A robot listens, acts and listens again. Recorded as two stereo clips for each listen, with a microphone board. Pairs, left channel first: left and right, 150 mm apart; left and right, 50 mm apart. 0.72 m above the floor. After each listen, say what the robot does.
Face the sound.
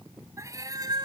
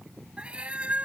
Turn 30° right.
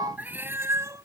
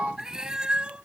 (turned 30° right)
Turn 20° right.
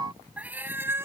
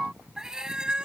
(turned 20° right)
Turn 20° right.
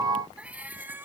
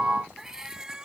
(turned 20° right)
Turn 30° right.
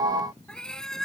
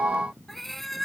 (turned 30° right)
Facing the cat meowing.